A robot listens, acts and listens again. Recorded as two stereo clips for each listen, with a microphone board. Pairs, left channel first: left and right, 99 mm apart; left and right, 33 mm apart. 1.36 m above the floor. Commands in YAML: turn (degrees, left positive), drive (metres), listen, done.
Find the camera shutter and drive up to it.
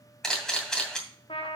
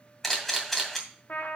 turn: 30
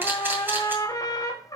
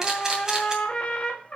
turn: -20
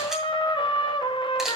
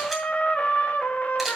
listen: true
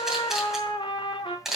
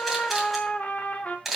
drive: 1.0
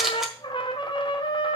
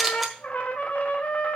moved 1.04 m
drive: 1.0
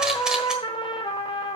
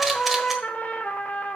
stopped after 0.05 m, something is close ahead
listen: true
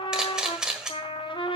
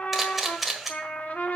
turn: -10
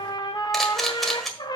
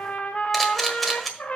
done: "I am next to the camera shutter."